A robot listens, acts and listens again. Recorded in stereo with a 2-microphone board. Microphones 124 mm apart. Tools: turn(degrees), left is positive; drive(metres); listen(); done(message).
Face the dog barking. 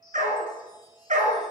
turn(degrees=-70)
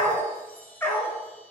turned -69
turn(degrees=20)
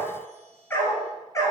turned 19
turn(degrees=25)
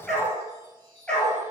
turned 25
turn(degrees=10)
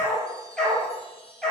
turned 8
done("Facing the dog barking, 2 to 4 m away.")